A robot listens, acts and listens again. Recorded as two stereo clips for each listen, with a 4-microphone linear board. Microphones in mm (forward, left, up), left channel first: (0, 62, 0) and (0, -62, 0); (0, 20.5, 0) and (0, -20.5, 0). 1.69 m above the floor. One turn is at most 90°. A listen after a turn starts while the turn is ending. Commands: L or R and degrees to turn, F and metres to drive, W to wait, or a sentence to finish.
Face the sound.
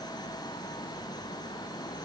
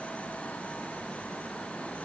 W
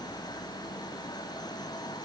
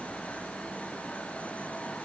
W
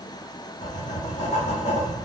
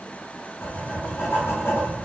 L75
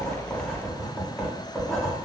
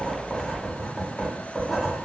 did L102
Found it: writing, straight ahead.